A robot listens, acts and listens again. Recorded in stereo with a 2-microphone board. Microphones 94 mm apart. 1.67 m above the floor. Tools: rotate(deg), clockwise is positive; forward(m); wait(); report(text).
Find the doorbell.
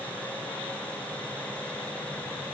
wait()
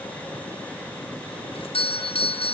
rotate(-75)
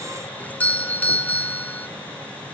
rotate(-20)
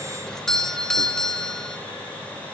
report("Facing the doorbell.")